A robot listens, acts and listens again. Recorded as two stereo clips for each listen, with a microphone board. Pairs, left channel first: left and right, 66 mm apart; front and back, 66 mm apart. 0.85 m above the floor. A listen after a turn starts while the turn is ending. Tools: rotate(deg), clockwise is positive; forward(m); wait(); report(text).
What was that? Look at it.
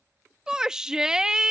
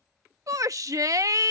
rotate(165)
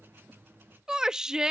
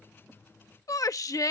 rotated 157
rotate(10)
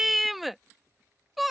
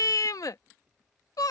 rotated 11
report("Found it: a shout, straight ahead.")